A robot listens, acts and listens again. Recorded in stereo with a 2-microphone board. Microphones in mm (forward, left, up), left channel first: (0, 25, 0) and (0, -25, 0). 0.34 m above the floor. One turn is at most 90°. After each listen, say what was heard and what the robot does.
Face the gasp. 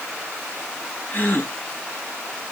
The gasp: about 45° left or 135° left. Turn 45° left.
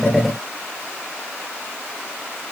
Keep listening.
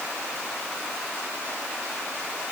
I heard a gasp, but can't make it out now. It was about straight ahead or 90° left.